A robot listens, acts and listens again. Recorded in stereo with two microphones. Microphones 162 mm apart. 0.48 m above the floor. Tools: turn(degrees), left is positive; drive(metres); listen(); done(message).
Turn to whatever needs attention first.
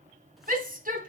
turn(degrees=-60)
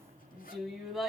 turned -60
done("Facing the shout, 2 to 4 m away.")